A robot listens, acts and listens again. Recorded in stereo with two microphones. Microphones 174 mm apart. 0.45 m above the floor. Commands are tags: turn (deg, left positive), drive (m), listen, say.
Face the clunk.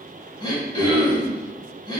<listen/>
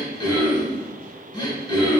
<listen/>
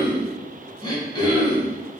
<say>I can't make out a clunk, only throat clearing.</say>